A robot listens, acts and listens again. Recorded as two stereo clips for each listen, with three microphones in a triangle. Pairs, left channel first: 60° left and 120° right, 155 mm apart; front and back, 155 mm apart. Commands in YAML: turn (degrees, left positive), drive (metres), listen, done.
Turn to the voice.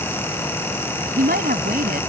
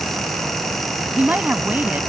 turn: -100
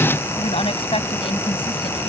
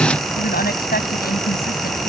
done: "Facing the woman speaking."